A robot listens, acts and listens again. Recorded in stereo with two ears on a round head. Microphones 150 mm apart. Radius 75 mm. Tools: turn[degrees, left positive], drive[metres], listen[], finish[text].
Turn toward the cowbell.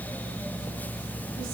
Action: listen[]
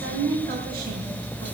Action: listen[]
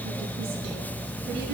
Action: finish[I can't make out a cowbell, only a woman speaking.]